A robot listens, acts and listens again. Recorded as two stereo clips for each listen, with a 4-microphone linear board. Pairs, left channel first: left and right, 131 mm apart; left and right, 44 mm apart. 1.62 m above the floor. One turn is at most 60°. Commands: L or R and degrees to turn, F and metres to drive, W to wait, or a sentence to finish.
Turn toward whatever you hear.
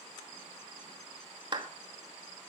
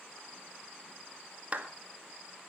R35
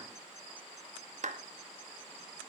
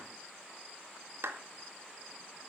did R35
R60
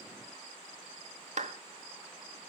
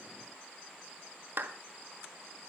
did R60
R60
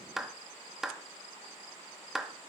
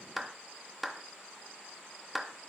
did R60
Facing the clap, 2 to 4 m away.